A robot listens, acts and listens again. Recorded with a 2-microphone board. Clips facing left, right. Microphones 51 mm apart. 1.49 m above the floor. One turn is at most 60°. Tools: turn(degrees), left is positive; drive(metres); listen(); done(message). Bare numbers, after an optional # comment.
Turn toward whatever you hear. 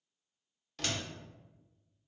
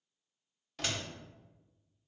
turn(-30)
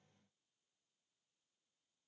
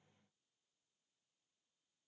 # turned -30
listen()
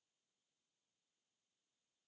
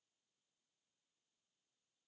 done("I heard a door slam, but can't make it out now. It was about 20° left or 140° right.")